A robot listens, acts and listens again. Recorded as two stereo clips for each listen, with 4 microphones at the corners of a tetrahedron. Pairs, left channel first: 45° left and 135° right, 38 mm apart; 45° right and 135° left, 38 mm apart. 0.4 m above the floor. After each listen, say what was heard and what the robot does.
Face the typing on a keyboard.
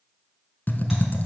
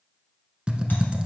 The typing on a keyboard: 75° left. Turn 75° left.
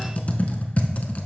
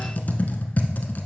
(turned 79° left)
Facing the typing on a keyboard.